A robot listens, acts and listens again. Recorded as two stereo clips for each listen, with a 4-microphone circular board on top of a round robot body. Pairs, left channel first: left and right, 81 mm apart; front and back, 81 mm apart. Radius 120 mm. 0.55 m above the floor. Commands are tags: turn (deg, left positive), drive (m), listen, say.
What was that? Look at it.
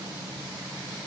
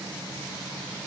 <listen/>
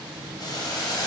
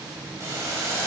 <turn deg="125"/>
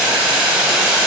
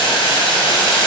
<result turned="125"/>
<turn deg="-10"/>
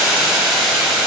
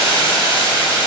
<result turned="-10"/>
<say>Facing the boiling, 2 to 4 m away.</say>